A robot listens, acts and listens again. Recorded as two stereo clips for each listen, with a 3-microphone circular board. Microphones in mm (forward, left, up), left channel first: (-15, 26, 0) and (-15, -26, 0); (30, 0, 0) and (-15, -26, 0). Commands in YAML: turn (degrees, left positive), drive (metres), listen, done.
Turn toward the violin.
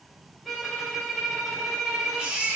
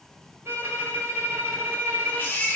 turn: 180
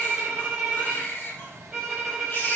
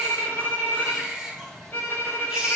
turn: -15
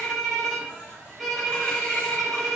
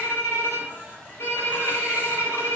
done: "Found it: a violin, straight ahead."